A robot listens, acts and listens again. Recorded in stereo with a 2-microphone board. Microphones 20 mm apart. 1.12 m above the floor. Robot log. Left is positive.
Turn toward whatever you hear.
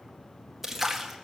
cmd yaw -30
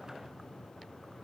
cmd idle
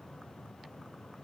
end: I heard a splash, but can't make it out now. It was about 20° left or 140° right.